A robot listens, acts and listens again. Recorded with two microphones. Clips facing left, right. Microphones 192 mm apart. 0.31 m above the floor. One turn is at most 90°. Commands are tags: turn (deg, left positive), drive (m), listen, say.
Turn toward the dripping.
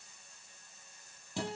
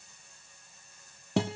<listen/>
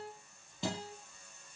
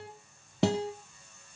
<listen/>
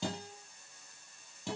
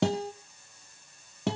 <say>I can't make out dripping, only a guitar.</say>